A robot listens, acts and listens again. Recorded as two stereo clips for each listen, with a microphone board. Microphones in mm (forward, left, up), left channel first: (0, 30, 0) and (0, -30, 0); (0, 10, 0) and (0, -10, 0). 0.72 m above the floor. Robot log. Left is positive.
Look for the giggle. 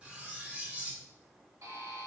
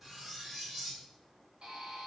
cmd idle
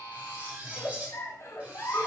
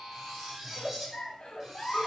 note: The giggle: about 60° left or 120° left.
cmd yaw +60
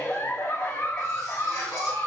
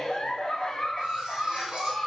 note: So it is at 55° left.
cmd yaw +55
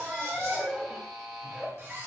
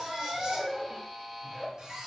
end: Found it: a giggle, straight ahead.